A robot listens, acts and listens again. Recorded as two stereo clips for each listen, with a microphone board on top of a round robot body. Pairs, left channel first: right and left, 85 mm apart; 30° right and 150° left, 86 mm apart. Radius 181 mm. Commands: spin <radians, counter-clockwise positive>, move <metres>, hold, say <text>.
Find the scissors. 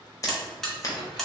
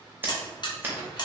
spin -2.44
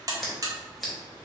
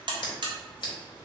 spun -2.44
say Facing the scissors, under 1 m away.